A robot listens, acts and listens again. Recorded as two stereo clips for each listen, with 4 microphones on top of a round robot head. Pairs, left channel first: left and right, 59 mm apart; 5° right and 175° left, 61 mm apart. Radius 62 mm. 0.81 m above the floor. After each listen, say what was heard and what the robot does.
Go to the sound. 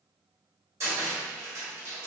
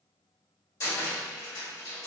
The cupboard door: 45° right. Turn 45° right.
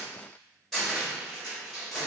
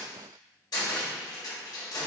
Drive 1.0 m forward.
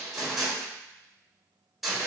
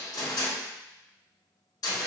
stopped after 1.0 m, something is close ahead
I am next to the cupboard door.